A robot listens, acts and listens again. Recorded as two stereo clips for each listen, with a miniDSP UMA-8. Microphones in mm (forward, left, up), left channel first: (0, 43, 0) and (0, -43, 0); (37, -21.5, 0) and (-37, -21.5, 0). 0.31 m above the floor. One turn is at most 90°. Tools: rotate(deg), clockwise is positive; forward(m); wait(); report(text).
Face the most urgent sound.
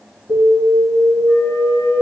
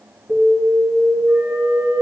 rotate(90)
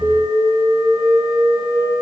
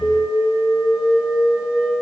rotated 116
report("Found it: an alarm, straight ahead, 1 to 2 m away.")